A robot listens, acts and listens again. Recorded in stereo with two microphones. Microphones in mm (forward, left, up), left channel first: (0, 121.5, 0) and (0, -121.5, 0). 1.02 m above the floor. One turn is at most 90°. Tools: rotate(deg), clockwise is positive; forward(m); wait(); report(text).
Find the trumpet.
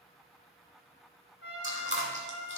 rotate(-60)
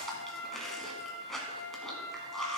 rotate(-55)
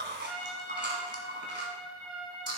report("Found it: a trumpet, straight ahead, 2 to 4 m away.")